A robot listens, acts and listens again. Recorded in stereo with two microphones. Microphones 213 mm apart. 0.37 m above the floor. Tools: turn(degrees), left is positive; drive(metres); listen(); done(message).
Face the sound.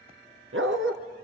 turn(degrees=-90)
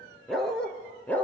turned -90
turn(degrees=10)
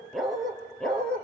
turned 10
done("Found it: a dog barking, straight ahead.")